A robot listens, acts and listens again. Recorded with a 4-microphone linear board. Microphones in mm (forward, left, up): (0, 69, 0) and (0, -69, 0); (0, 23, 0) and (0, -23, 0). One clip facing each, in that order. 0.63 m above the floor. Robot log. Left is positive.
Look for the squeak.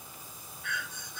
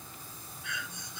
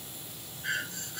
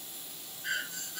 cmd idle
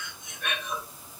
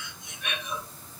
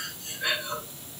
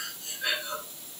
cmd idle
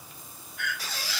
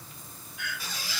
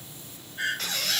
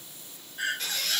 cmd yaw +90
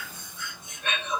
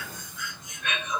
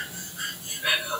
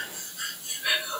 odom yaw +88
cmd idle
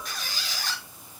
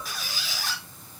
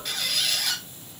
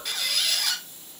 end: Facing the squeak.